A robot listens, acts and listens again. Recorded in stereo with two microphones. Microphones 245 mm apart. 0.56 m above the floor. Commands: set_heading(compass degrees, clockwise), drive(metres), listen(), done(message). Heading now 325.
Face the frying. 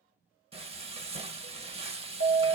set_heading(350)
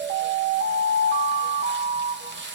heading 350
set_heading(120)
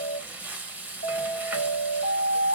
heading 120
done("Found it: frying, straight ahead.")